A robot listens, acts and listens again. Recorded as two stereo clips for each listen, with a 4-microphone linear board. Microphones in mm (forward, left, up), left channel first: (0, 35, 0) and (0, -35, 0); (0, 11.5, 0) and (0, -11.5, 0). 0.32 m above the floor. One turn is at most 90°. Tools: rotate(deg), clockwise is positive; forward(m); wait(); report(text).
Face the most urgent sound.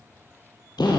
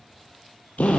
wait()
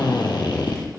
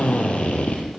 wait()
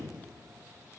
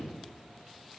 report("I can't make out anything urgent to turn to.")